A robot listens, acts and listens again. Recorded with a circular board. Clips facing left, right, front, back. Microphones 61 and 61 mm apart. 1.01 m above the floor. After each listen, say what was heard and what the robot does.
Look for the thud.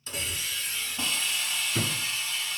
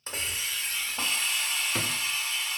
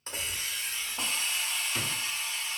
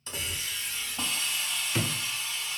The thud: 110° right. Turn 110° right.
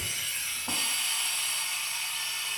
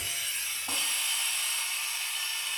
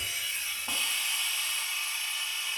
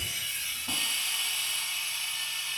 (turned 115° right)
Facing where the thud came from. I can't hear it now.